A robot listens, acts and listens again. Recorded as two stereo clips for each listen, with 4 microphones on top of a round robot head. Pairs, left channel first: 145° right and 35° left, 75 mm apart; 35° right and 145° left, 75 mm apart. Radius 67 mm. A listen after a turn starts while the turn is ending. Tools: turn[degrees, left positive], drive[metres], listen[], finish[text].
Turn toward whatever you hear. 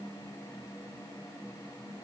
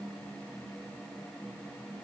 Action: listen[]
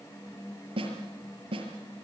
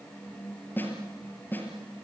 Thought: The snare drum: 30° left.
Action: turn[30]
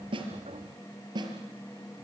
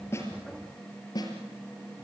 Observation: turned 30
Action: finish[Facing the snare drum, over 4 m away.]